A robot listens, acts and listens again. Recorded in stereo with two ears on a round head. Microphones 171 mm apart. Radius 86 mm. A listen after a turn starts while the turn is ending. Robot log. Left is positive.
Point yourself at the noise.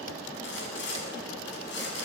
note: The sawing: about 70° left or 110° left.
cmd yaw +70
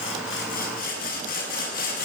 note: So it is at 50° left.
cmd yaw +50
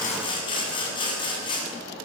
note: The sawing is now 25° left.
cmd yaw +25
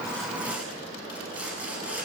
note: The sawing is now 10° right.
cmd yaw -10
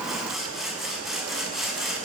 end: Found it: sawing, straight ahead, over 4 m away.